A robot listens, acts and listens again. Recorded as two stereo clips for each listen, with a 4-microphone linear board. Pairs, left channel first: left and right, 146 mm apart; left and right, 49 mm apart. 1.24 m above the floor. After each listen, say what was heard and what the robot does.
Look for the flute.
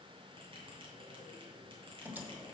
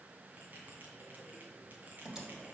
Keep listening.
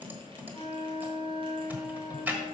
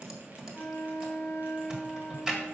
The flute: about 45° left or 135° left. Turn 45° left.
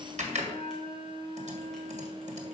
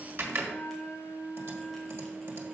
So it is at 80° left. Turn 80° left.
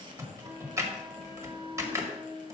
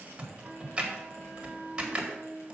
The flute is now 20° right. Turn 20° right.
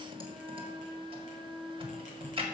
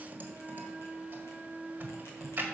Facing the flute, 1 to 2 m away.